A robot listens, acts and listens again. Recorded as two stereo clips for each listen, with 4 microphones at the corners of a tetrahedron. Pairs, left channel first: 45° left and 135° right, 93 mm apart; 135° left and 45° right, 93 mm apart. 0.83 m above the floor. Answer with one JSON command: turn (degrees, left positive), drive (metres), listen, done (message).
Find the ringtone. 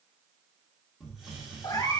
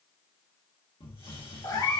{"listen": true}
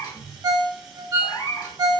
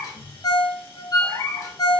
{"turn": 180}
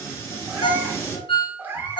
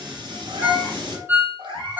{"turn": 25}
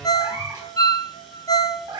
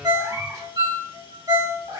{"done": "Found it: a ringtone, straight ahead, under 1 m away."}